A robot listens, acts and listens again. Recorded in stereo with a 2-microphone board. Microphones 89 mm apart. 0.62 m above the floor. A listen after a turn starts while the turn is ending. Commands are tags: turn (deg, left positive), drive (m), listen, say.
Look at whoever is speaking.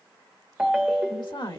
<turn deg="60"/>
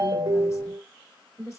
<turn deg="40"/>
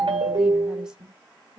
<turn deg="-10"/>
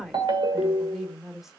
<say>Found it: a woman speaking, straight ahead, 1 to 2 m away.</say>